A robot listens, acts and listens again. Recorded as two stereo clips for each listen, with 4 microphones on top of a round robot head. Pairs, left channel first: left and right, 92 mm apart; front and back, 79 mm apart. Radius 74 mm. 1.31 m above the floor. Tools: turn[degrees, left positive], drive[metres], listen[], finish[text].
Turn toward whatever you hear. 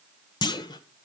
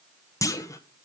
Thought: The clunk: 50° left.
Action: turn[50]
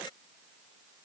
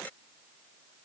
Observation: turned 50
Action: finish[I heard a clunk from this way, but can't make it out now.]